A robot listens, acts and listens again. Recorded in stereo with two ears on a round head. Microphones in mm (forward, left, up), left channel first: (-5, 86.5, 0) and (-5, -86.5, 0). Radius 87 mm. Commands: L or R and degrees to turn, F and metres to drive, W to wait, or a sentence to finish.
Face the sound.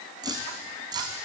R25
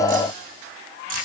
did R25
W
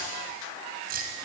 R130
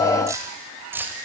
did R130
R10
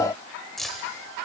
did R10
Facing the keys jangling.